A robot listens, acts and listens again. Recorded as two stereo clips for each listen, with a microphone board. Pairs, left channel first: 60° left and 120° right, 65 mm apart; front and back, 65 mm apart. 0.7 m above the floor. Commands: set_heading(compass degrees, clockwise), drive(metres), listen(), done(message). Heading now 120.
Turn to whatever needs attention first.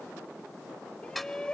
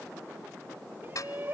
set_heading(350)
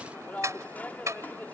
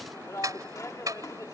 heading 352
done("Facing the shout.")